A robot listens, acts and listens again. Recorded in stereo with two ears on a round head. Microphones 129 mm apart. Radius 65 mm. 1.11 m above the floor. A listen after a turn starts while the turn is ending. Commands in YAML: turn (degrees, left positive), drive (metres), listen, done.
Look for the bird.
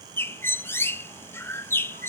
turn: 15
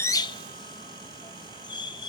turn: 150
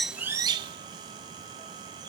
turn: -30
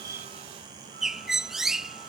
done: "Facing the bird."